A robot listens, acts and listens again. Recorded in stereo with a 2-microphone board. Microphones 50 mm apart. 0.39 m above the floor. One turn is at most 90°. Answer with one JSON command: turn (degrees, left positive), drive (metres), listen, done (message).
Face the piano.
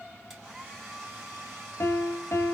{"turn": 70}
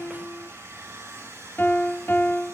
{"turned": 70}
{"turn": 40}
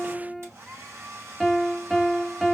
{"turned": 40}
{"done": "Facing the piano."}